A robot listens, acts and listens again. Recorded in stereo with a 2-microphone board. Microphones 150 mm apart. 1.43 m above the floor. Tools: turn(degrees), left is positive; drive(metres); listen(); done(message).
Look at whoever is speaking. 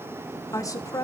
turn(degrees=20)
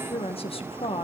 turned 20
turn(degrees=140)
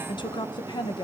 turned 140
turn(degrees=30)
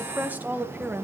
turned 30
turn(degrees=-10)
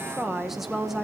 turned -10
done("Facing the woman speaking, 1 to 2 m away.")